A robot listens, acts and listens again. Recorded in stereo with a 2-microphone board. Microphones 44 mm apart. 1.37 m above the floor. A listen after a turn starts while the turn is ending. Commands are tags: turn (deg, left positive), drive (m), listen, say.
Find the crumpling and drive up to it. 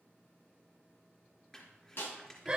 <turn deg="30"/>
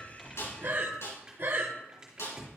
<turn deg="-15"/>
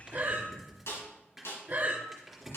<drive m="1.0"/>
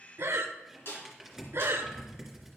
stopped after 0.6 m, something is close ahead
<say>Something is in my way. I am facing the crumpling but have not reached it.</say>